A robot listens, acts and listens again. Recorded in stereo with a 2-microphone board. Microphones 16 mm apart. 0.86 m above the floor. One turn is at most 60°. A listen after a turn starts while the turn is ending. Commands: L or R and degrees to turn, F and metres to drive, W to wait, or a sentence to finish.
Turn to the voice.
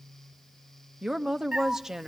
R35
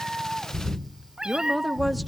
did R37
Facing the woman speaking, under 1 m away.